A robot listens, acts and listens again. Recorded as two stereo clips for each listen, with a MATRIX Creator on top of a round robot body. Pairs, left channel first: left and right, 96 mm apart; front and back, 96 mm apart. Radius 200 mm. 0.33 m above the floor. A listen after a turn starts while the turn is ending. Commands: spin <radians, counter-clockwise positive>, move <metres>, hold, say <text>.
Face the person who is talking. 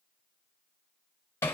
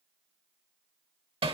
hold
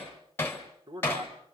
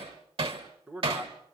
spin -1.92
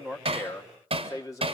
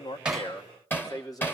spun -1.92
spin 0.79
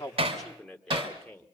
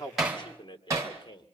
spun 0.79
spin 0.17
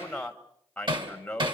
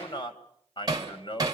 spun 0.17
spin 0.17
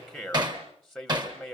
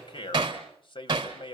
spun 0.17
say Found it: a man speaking, straight ahead.